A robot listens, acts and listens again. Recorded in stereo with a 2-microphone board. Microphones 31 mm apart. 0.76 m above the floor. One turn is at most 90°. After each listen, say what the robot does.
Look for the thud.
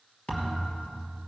Turn 40° left.
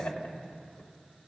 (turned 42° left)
Keep listening.
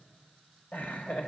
I heard a thud, but can't make it out now. It was about straight ahead or 100° left.